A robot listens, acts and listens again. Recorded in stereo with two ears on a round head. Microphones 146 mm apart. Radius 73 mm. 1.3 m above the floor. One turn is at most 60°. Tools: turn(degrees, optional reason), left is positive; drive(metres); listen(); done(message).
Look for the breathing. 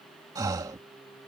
turn(degrees=-25, reason="The breathing: about 25° right or 155° right.")
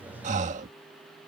turn(degrees=-60, reason="So it is at 135° right.")
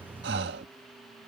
turn(degrees=-60, reason="The breathing is now 75° right.")
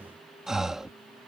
done("Found it: breathing, straight ahead.")